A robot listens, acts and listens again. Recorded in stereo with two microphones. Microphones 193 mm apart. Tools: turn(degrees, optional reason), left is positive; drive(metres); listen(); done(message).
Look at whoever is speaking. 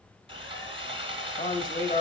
turn(degrees=40, reason="The man speaking: about 40° left or 140° left.")
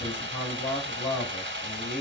turn(degrees=90, reason="So it is at 90° left.")
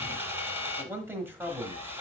turn(degrees=-15, reason="The man speaking is now 15° right.")
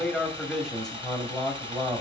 done("Facing the man speaking.")